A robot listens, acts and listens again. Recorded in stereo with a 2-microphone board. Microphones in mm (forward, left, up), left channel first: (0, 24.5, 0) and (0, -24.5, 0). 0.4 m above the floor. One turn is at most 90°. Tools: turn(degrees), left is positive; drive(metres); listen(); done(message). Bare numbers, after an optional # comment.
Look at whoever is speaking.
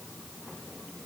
listen()
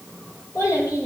turn(90)
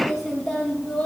done("Facing the child speaking.")